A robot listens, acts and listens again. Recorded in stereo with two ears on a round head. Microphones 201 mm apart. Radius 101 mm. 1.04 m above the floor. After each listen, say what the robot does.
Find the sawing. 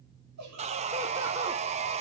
Turn 30° right.
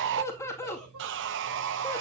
Turn 125° right.
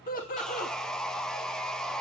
Facing the sawing.